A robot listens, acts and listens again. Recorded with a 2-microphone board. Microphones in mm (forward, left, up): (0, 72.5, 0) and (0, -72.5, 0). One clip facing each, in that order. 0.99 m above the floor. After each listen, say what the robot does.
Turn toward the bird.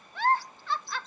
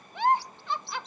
Turn 90° right.
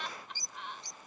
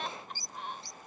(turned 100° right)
Turn 20° left.
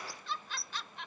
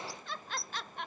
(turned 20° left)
Found it: a bird, straight ahead.